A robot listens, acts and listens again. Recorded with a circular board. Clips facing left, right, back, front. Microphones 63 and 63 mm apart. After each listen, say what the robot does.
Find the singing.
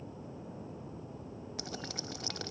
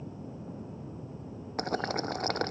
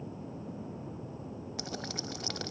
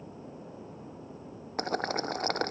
Keep listening.
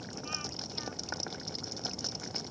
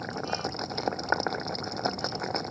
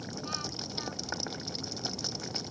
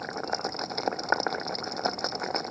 Keep listening.
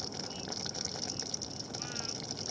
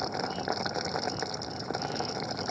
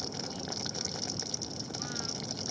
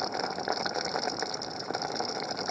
I can't make out singing, only boiling.